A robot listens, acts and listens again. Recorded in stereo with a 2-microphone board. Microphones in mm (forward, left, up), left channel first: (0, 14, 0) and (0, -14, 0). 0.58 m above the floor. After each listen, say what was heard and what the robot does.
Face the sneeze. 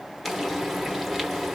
Keep listening.
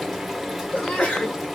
The sneeze: about 40° left or 140° left. Turn 40° left.
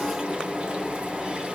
Keep listening.
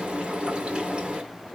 I heard a sneeze, but can't make it out now. It was about straight ahead or 100° left.